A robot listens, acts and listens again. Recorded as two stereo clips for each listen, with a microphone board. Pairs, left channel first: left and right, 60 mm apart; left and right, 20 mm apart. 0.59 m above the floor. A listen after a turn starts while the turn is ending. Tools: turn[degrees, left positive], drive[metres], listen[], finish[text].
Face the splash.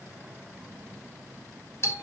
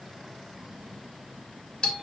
Action: listen[]
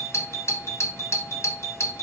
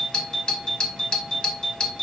Action: listen[]
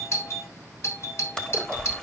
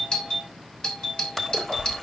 Action: turn[30]
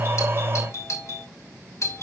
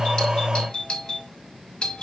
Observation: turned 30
Action: listen[]
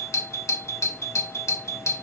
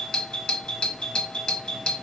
Action: finish[I heard a splash, but can't make it out now. It was about 15° right or 135° left.]